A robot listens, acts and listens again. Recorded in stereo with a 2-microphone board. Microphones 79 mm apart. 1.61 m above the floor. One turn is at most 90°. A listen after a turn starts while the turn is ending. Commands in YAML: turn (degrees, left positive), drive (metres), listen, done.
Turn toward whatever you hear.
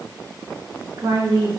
turn: -65
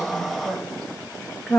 done: "Found it: a woman speaking, straight ahead."